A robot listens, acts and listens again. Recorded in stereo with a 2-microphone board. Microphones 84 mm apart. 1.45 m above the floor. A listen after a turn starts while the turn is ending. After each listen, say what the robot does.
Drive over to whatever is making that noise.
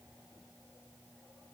Keep listening.
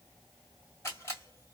Turn 35° left.
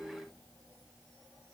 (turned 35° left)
Keep listening.
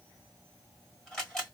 Turn 10° left.
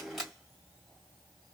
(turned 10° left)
Drive 1.0 m forward.
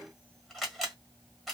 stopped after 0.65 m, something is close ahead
I am next to the camera shutter.